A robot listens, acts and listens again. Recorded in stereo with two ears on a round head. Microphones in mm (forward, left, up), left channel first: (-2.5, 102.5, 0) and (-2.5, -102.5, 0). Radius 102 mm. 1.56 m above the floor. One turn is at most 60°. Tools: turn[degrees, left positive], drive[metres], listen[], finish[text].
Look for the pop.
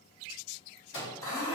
Action: listen[]
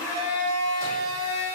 Action: listen[]
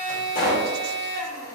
Thought: The pop: about 40° left or 140° left.
Action: turn[40]
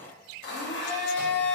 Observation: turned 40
Action: listen[]
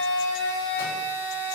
Action: finish[I heard a pop, but can't make it out now. It was about straight ahead or 100° left.]